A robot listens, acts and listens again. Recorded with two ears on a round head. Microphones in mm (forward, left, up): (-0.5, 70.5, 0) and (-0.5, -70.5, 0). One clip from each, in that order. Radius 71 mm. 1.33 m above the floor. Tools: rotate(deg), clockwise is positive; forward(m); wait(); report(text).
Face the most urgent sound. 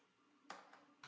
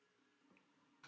wait()
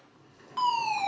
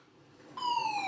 rotate(-50)
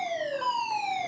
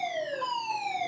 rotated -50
rotate(-15)
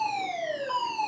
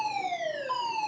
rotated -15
report("Facing the fire alarm, 2 to 4 m away.")